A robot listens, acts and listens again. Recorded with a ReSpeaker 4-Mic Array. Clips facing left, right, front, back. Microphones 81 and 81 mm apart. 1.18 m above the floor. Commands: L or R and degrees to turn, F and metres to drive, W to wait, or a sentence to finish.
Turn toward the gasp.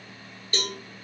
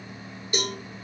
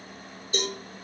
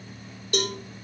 W
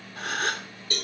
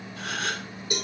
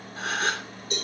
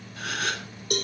L55
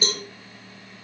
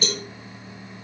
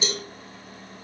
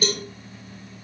I heard a gasp from this way, but can't make it out now.